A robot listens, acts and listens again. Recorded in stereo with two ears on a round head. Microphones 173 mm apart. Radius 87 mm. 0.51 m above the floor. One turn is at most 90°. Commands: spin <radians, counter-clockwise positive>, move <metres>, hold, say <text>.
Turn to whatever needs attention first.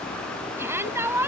spin -0.52
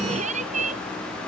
spin -1.57
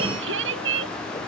spin -1.22
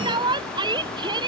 spin -0.44
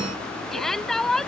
say Facing the shout.